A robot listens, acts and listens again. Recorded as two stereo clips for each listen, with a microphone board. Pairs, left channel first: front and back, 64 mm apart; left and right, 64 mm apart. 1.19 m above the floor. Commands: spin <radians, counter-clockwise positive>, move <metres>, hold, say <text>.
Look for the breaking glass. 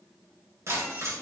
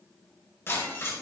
spin 2.44
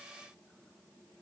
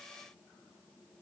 say Facing where the breaking glass came from. I can't hear it now.